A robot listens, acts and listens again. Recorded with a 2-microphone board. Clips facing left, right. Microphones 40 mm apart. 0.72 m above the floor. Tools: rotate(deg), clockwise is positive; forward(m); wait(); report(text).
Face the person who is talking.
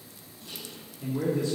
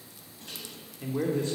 rotate(45)
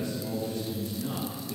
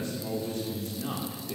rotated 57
rotate(70)
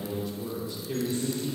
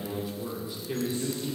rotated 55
rotate(15)
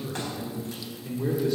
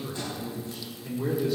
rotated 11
report("Found it: a man speaking, straight ahead, 2 to 4 m away.")